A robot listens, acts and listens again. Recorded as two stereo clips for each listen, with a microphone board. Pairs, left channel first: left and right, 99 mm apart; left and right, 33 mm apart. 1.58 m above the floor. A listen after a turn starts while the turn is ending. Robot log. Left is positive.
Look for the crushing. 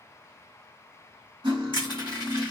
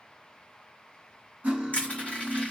note: The crushing: about 50° left or 130° left.
cmd yaw +50
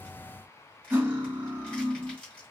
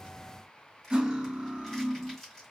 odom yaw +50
note: So it is at 15° left.
cmd yaw +15
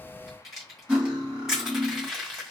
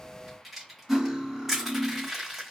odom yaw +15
end: Facing the crushing.